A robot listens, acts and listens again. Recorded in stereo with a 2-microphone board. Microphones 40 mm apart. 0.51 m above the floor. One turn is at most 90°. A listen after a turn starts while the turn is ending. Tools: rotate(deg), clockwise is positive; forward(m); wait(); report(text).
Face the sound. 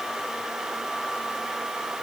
wait()
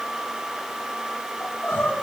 rotate(-65)
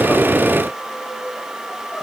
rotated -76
rotate(10)
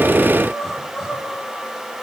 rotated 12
report("Facing the crying, over 4 m away.")